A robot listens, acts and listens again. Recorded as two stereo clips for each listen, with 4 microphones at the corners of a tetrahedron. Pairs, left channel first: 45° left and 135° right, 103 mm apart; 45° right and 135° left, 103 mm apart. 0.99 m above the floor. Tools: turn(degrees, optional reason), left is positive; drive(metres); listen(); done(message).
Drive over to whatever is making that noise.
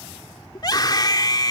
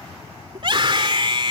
turn(degrees=95, reason="The scream: 95° left.")
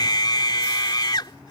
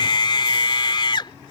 drive(metres=1.0)
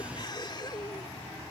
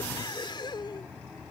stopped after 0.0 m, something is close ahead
listen()
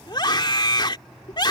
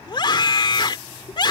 done("Blocked. The scream is further on, straight ahead.")